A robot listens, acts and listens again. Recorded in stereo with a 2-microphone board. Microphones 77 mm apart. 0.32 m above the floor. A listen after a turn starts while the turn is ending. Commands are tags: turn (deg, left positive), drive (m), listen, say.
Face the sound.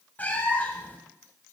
<turn deg="25"/>
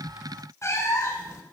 <turn deg="130"/>
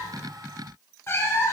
<turn deg="40"/>
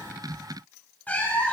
<turn deg="20"/>
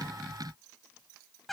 <say>Facing the cat meowing, under 1 m away.</say>